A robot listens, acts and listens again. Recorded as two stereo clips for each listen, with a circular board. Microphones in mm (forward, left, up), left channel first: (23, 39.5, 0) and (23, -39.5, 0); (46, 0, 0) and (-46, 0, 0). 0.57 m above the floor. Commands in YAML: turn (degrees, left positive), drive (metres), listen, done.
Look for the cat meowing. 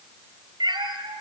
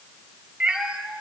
turn: -90
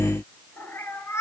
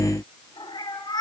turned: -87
turn: 35
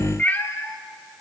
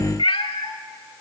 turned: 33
turn: 25
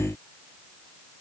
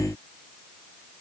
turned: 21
listen: true
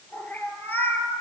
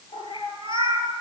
turn: 25
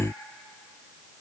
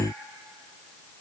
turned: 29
listen: true
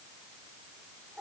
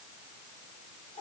listen: true
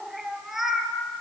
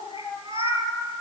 done: "Facing the cat meowing, 2 to 4 m away."